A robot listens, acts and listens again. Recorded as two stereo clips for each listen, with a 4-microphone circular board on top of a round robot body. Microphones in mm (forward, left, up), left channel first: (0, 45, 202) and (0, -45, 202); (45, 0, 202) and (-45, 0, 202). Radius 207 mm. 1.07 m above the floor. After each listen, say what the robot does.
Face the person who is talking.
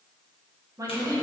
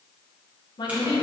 Turn 35° right.
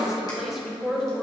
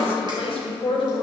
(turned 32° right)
Found it: a woman speaking, straight ahead.